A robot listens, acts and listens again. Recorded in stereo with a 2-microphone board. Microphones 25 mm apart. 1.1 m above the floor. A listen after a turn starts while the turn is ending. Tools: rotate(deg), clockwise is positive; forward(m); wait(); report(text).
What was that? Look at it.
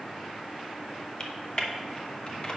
rotate(-35)
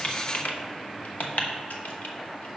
rotate(-110)
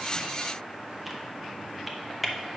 report("Found it: typing on a keyboard, straight ahead, under 1 m away.")